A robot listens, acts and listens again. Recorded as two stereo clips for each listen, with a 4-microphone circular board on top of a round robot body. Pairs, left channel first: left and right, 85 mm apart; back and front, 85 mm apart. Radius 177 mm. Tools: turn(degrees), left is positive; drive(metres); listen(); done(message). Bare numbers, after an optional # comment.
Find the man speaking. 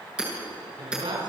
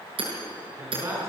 # The man speaking: 60° right.
turn(-60)
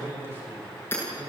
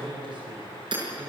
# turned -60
# The man speaking is now 25° right.
turn(-25)
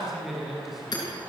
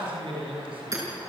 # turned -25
done("Facing the man speaking, over 4 m away.")